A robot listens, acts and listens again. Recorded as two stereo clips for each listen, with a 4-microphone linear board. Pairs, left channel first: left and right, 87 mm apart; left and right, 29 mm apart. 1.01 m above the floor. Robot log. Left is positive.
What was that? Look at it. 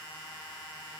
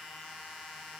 cmd idle
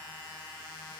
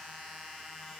cmd idle
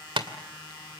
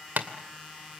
note: The tapping: about 65° right or 115° right.
cmd yaw -65
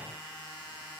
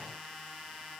cmd idle
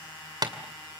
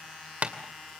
note: So it is at 50° right.
cmd yaw -50
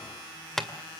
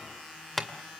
end: Found it: tapping, straight ahead.